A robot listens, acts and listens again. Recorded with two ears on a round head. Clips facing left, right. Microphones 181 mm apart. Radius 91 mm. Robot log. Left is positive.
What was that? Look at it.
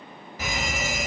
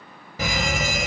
note: The fire alarm: about 60° right or 120° right.
cmd yaw -60
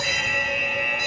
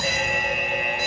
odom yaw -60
note: So it is at 35° right.
cmd yaw -35
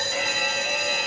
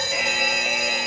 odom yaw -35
note: The fire alarm is now 15° right.
cmd yaw -15
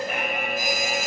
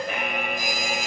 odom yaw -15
end: Found it: a fire alarm, straight ahead.